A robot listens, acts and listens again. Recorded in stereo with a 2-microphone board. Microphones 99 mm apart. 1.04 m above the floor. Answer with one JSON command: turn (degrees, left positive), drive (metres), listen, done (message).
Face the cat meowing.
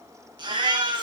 {"turn": -90}
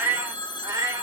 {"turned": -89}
{"turn": -35}
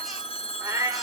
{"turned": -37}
{"turn": -30}
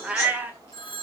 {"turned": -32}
{"turn": -15}
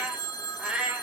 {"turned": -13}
{"turn": -10}
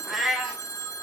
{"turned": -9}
{"done": "Facing the cat meowing."}